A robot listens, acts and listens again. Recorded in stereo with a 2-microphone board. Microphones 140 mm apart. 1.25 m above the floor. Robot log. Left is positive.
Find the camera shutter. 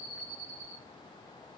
cmd idle
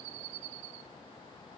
cmd idle
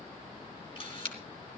note: The camera shutter: about 40° left or 140° left.
cmd yaw +40
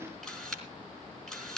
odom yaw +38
end: Found it: a camera shutter, straight ahead, 2 to 4 m away.